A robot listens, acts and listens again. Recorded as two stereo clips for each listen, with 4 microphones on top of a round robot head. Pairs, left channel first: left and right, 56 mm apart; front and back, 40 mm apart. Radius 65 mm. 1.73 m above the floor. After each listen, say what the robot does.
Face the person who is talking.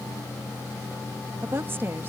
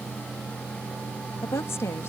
Turn 30° right.
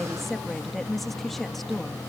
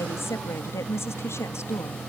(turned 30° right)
Facing the woman speaking.